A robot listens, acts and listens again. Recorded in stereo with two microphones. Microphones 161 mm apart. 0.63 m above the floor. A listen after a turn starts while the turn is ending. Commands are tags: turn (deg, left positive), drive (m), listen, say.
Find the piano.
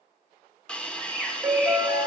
<turn deg="-30"/>
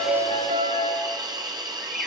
<turn deg="-115"/>
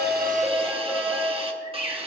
<say>Found it: a piano, straight ahead.</say>